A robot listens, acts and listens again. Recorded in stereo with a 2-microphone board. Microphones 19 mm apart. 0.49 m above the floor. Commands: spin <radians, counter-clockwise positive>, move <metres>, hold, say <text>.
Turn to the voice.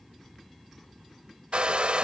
hold
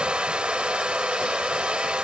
hold
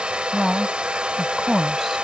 spin 0.52
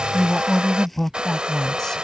spin 2.62
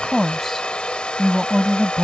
say Facing the woman speaking.